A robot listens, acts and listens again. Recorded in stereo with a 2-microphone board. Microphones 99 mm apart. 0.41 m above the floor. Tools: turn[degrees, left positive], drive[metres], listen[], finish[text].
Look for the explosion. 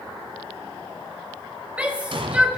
Thought: The explosion: about 60° right or 120° right.
Action: turn[-60]
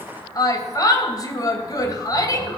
Action: listen[]
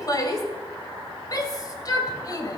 Action: finish[I heard an explosion, but can't make it out now. It was about straight ahead or 60° right.]